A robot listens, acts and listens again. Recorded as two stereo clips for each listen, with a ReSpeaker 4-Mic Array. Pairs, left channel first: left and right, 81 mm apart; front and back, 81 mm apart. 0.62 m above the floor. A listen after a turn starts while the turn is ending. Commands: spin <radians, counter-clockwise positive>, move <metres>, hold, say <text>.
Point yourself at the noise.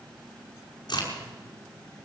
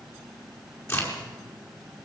spin 0.96
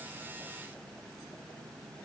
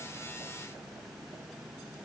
say I heard a crack from this way, but can't make it out now.